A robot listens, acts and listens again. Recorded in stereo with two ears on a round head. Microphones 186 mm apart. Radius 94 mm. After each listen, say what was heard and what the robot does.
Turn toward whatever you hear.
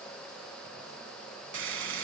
The frying: about 75° right or 105° right. Turn 75° right.
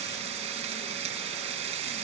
So it is at 30° right. Turn 30° right.
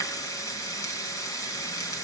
The frying is now 15° left. Turn 15° left.
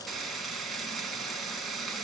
Facing the frying.